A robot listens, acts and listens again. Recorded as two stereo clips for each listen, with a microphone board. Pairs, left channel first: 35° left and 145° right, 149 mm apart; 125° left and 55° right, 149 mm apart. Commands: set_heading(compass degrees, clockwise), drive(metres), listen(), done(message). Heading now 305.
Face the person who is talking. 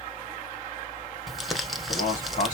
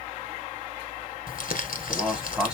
set_heading(280)
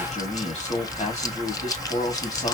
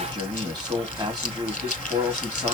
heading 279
done("Found it: a man speaking, straight ahead.")